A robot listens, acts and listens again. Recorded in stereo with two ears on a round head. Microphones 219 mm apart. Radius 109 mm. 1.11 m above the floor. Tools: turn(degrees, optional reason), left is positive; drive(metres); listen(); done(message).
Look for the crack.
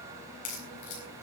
turn(degrees=90)
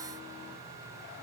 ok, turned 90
done("Facing where the crack came from. I can't hear it now.")